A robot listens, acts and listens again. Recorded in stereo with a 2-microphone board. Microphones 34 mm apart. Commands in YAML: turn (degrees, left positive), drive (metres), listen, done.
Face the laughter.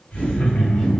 turn: 50
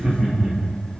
turn: -20
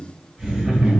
turn: -25
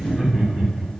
done: "Found it: laughter, straight ahead, 2 to 4 m away."